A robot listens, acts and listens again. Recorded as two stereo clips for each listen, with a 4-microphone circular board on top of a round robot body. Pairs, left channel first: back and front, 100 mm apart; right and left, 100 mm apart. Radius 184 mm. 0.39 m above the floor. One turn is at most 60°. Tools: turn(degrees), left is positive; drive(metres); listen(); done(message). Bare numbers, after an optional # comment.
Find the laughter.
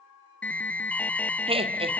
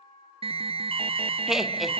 done("Found it: laughter, straight ahead, 2 to 4 m away.")